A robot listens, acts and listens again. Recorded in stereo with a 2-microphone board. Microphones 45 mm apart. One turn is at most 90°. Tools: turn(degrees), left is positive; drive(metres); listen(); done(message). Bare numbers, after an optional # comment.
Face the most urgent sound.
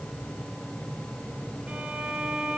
listen()
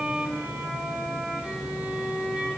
listen()
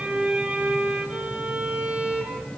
done("I can't make out anything urgent, only a violin.")